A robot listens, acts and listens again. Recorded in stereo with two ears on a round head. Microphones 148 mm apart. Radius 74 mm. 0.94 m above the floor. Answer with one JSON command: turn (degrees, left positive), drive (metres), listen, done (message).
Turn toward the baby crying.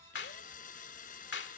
{"listen": true}
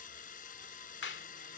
{"listen": true}
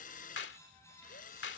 {"done": "I can't make out a baby crying to turn to."}